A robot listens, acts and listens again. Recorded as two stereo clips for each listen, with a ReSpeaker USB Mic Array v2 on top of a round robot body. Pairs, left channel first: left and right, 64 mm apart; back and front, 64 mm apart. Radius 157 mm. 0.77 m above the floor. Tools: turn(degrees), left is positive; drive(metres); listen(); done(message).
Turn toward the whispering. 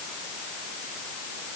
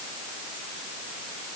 listen()
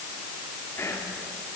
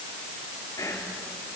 turn(degrees=140)
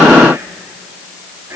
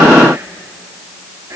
turn(degrees=-45)
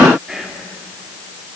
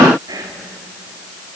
done("Found it: whispering, straight ahead.")